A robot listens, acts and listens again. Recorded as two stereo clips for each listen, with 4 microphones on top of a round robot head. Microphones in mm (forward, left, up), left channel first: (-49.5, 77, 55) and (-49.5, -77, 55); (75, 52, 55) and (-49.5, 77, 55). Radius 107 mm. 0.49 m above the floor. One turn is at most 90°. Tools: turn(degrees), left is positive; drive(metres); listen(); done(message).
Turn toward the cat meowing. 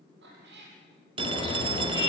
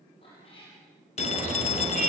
turn(degrees=-70)
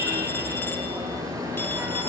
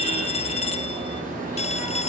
listen()
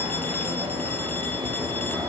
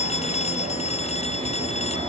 listen()
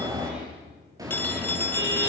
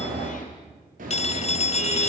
done("I heard a cat meowing from this way, but can't make it out now.")